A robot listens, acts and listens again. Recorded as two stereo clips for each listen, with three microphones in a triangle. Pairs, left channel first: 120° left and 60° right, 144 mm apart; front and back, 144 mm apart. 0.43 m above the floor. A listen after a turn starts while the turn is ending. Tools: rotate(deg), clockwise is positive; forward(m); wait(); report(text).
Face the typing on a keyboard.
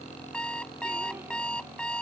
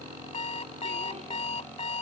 wait()
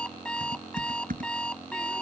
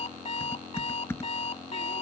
rotate(75)
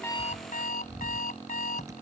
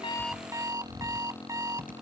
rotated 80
report("Facing the typing on a keyboard.")